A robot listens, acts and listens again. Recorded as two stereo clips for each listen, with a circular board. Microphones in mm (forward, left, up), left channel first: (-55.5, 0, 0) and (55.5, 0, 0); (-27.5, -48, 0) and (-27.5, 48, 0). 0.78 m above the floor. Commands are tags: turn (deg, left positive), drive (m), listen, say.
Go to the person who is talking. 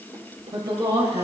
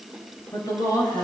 <turn deg="-45"/>
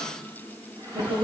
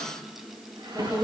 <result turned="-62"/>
<turn deg="15"/>
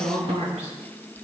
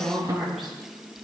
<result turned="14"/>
<drive m="1.0"/>
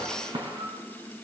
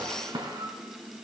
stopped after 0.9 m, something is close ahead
<listen/>
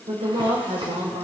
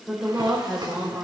<say>Something is in my way. I am facing the woman speaking but have not reached it.</say>